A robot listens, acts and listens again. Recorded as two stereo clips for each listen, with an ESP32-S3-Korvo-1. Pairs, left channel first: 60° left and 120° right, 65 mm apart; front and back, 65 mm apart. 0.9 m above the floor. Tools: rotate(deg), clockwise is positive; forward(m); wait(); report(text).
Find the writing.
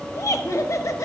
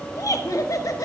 wait()
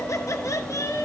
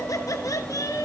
wait()
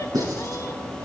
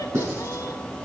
rotate(130)
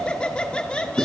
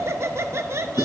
rotate(25)
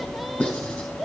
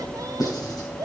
report("Facing the writing.")